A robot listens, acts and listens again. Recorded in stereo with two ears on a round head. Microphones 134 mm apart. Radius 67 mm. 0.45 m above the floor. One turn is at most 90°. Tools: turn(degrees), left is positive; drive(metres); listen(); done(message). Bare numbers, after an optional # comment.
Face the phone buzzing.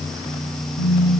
# The phone buzzing: about 45° left or 135° left.
turn(45)
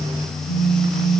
# So it is at 90° left.
turn(90)
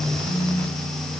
# The phone buzzing is now 20° left.
turn(20)
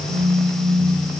done("Found it: a phone buzzing, straight ahead.")